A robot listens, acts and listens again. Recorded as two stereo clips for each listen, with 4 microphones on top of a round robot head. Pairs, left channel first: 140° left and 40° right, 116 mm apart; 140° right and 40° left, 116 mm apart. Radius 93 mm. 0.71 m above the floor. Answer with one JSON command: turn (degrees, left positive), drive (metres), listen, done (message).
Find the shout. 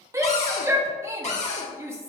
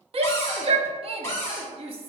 {"turn": 25}
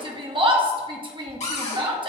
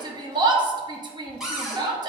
{"done": "Found it: a shout, straight ahead."}